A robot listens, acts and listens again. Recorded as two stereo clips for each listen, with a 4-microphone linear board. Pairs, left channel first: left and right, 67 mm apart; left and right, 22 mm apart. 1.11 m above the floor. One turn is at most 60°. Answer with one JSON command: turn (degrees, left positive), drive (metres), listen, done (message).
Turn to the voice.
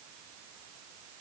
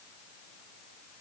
{"listen": true}
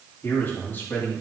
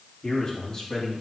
{"turn": 30}
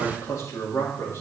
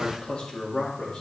{"turn": 60}
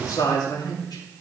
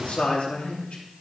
{"turn": 60}
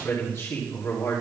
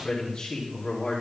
{"turn": 45}
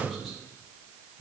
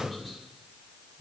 {"done": "Facing the man speaking, 2 to 4 m away."}